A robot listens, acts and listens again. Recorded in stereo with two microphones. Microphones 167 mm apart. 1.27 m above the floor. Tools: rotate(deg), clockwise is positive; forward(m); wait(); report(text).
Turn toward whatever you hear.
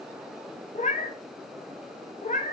rotate(-50)
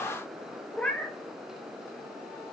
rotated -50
report("Found it: a cat meowing, straight ahead, under 1 m away.")